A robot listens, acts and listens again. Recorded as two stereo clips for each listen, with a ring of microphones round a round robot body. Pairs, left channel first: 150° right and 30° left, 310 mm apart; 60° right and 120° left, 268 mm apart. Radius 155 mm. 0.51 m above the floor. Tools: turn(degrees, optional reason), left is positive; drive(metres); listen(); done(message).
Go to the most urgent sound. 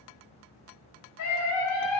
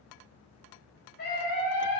turn(degrees=-120, reason="The scream: 120° right.")
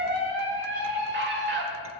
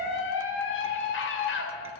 turn(degrees=-20, reason="The scream is now 20° right.")
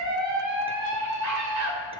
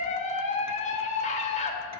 drive(metres=1.0)
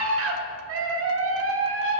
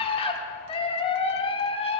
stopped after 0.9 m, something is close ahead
done("Arrived at the scream, straight ahead.")